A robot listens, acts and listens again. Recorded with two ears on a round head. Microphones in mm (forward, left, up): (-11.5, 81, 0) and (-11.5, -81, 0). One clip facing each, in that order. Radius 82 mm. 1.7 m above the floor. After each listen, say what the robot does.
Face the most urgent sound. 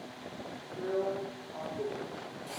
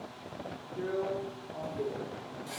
Keep listening.
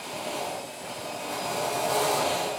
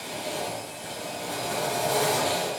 Keep listening.
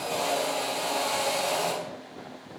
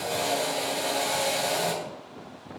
I can't make out anything urgent to turn to.